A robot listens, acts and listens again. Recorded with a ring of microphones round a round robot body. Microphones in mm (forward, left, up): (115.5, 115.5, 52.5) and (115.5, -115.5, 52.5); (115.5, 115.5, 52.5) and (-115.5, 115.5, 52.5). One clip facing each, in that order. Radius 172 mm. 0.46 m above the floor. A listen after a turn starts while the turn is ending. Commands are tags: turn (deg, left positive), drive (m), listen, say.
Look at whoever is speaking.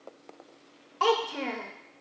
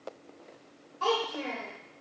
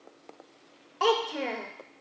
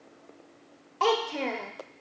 <turn deg="85"/>
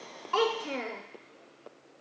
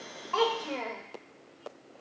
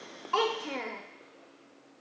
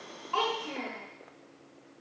<turn deg="20"/>
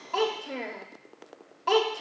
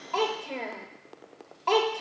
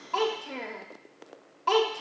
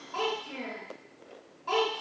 <say>Facing the child speaking, under 1 m away.</say>